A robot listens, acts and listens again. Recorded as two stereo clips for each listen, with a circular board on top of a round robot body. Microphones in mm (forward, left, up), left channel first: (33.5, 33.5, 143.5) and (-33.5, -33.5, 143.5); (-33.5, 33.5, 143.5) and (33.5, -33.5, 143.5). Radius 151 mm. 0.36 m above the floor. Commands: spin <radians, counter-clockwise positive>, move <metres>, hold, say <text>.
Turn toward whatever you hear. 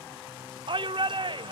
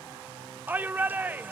spin -2.01
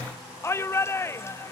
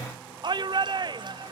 spin -0.26
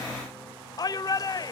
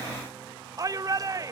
say Found it: a shout, straight ahead.